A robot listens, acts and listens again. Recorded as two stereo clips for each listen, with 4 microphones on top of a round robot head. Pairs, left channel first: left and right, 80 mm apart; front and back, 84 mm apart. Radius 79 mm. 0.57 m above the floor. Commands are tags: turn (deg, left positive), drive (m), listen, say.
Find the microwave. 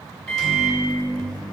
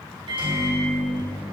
<turn deg="175"/>
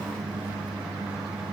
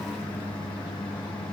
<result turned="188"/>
<turn deg="-10"/>
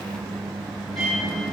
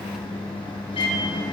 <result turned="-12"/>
<say>Facing the microwave.</say>